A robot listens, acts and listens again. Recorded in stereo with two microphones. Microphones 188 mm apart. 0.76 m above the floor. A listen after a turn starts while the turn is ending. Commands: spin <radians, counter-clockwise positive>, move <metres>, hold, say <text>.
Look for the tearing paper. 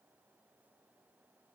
hold
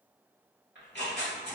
spin 1.22
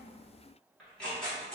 say Found it: tearing paper, straight ahead, 1 to 2 m away.